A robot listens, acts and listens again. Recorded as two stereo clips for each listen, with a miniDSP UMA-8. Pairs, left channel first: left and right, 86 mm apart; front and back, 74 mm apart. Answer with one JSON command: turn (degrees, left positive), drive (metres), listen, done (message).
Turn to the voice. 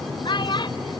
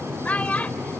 {"turn": 70}
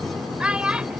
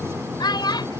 {"turn": -10}
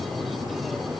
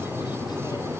{"listen": true}
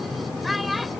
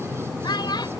{"done": "Found it: a child speaking, straight ahead."}